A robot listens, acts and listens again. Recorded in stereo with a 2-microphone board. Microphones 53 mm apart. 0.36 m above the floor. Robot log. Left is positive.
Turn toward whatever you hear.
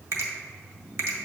note: The finger snap: about 60° right or 120° right.
cmd yaw -60
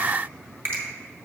note: So it is at 45° right.
cmd yaw -45
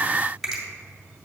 end: Found it: a finger snap, straight ahead, 1 to 2 m away.